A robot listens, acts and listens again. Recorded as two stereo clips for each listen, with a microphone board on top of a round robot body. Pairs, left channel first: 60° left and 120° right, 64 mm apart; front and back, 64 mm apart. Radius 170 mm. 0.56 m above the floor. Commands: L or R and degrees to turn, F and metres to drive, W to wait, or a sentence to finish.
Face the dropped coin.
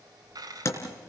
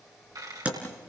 R150
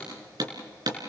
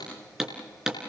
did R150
Facing where the dropped coin came from. I can't hear it now.